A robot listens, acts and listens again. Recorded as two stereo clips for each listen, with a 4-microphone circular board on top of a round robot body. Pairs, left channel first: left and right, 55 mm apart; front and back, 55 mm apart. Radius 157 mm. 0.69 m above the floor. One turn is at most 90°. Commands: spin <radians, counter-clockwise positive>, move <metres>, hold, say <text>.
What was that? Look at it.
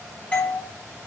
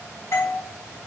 spin 0.52
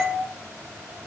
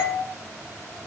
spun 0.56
say Facing the doorbell, over 4 m away.